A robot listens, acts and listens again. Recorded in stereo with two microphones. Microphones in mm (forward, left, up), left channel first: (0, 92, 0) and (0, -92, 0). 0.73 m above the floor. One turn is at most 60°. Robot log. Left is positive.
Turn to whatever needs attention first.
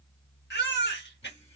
note: The baby crying: about 70° left or 110° left.
cmd yaw +60
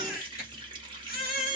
note: So it is at 55° left.
cmd yaw +55
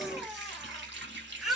end: Found it: a baby crying, straight ahead, 1 to 2 m away.